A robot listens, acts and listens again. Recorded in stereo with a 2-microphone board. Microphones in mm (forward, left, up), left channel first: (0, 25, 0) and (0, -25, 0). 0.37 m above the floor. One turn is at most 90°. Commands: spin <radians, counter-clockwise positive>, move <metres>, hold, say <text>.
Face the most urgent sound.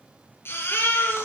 spin 0.87
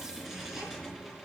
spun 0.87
hold
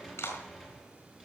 hold
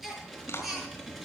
say Found it: a baby crying, straight ahead.